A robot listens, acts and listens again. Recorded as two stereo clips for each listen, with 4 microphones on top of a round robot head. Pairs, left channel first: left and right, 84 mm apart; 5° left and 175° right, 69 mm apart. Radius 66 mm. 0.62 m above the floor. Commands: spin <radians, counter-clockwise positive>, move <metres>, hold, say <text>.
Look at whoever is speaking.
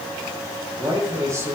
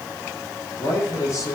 spin -0.70
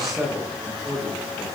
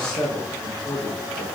say Found it: a man speaking, straight ahead.